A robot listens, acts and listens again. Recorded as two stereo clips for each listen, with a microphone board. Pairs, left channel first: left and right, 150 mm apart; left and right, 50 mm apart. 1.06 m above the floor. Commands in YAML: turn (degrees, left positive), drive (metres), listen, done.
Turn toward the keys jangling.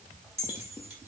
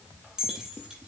turn: -15
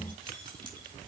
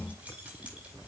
listen: true
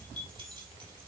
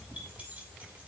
listen: true
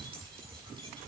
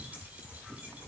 done: "I heard keys jangling, but can't make it out now. It was about straight ahead or 150° right."